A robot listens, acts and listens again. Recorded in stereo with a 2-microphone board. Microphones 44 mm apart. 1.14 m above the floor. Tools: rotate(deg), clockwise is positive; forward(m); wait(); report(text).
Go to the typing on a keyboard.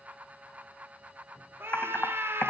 rotate(-65)
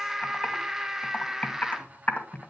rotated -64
rotate(-45)
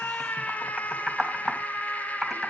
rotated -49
forward(1.0)
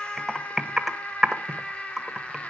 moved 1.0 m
rotate(10)
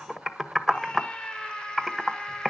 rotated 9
forward(1.0)
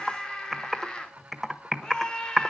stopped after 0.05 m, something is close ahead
report("Arrived at the typing on a keyboard, straight ahead.")